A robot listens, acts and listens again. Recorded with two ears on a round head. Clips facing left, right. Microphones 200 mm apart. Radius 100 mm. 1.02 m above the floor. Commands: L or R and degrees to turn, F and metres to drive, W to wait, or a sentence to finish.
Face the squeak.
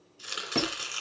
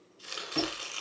L70
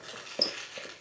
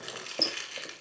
Found it: a squeak, straight ahead.